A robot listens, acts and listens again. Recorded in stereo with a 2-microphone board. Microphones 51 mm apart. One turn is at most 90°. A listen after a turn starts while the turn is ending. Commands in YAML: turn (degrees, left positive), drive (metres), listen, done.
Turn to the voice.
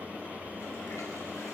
listen: true
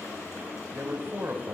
turn: -50
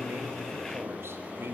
listen: true
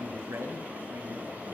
turn: -70
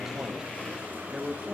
turn: -10
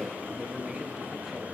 turn: -10
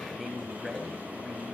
done: "Found it: a man speaking, straight ahead."